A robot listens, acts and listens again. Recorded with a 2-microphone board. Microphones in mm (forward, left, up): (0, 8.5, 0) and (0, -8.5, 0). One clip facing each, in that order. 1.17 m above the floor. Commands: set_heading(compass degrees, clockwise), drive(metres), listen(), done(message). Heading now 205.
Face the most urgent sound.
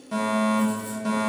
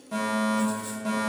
set_heading(180)
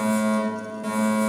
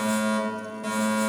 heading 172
set_heading(182)
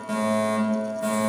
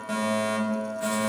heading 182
done("Facing the fire alarm, 2 to 4 m away.")